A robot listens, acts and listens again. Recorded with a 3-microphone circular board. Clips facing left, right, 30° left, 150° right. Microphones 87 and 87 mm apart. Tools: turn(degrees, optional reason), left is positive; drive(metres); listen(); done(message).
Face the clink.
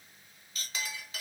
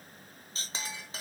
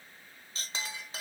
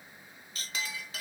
turn(degrees=-35, reason="The clink: 35° right.")
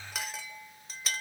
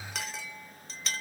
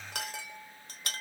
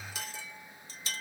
done("Facing the clink, under 1 m away.")